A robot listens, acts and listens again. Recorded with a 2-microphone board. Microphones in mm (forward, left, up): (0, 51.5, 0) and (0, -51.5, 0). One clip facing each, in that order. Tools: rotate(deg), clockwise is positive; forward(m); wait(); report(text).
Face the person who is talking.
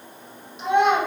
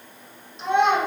rotate(-30)
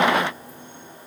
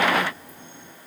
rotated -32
wait()
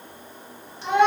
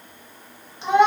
rotate(25)
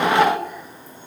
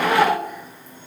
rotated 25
report("Found it: a child speaking, straight ahead, 1 to 2 m away.")